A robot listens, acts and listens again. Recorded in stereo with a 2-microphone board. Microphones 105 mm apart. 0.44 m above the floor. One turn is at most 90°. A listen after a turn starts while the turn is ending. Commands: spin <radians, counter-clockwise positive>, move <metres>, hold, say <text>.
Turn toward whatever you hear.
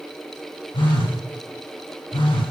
spin 0.96
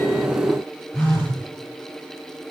spin 0.17
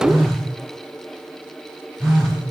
say Found it: a phone buzzing, straight ahead, 1 to 2 m away.